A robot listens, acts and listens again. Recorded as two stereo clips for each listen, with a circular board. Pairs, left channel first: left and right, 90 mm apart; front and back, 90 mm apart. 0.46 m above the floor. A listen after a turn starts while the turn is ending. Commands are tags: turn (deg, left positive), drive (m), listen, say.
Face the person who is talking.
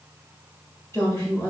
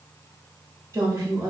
<turn deg="145"/>
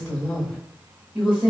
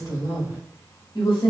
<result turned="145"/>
<turn deg="-10"/>
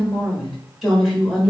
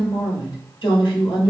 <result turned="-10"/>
<say>Found it: a woman speaking, straight ahead, 1 to 2 m away.</say>